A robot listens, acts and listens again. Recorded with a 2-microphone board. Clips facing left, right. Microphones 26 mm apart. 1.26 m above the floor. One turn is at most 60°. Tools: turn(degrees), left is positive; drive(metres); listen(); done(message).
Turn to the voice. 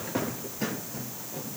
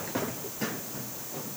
listen()
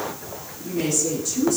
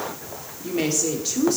turn(degrees=-45)
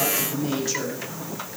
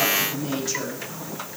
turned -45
done("Facing the woman speaking, 2 to 4 m away.")